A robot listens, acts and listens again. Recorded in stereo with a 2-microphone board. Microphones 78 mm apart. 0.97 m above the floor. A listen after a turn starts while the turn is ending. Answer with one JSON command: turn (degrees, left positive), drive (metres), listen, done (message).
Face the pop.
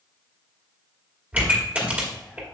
{"turn": -20}
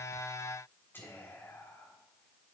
{"listen": true}
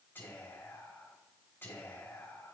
{"done": "I heard a pop, but can't make it out now. It was about straight ahead or 140° right."}